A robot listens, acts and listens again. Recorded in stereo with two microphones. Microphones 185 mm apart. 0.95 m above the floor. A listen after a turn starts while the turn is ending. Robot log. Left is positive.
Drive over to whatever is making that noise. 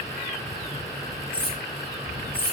note: The cutlery clinking: about 35° left or 145° left.
cmd yaw +35
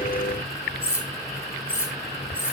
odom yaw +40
cmd fwd 1.0
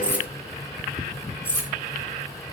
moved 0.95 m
note: The cutlery clinking is now 10° right.
cmd yaw -10
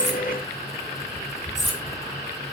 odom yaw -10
cmd idle
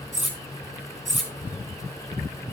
cmd fwd 1.0
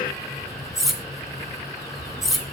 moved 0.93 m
cmd fwd 1.0
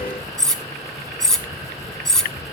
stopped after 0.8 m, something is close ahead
end: I am next to the cutlery clinking.